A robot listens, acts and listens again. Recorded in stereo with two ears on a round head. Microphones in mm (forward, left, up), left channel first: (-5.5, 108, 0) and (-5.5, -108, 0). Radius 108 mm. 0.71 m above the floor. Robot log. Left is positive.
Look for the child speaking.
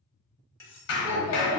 note: The child speaking: about 25° right or 155° right.
cmd yaw -25
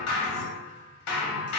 cmd idle
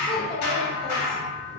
end: Found it: a child speaking, straight ahead.